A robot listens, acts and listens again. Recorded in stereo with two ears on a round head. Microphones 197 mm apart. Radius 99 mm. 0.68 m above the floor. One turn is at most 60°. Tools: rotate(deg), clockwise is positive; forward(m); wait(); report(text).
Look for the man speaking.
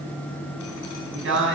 rotate(55)
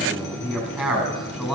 report("Found it: a man speaking, straight ahead.")